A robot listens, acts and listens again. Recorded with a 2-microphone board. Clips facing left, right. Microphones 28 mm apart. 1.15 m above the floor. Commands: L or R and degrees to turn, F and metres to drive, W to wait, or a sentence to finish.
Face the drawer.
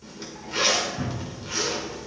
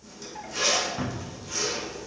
R25
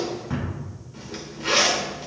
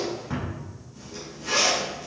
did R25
Found it: a drawer, straight ahead.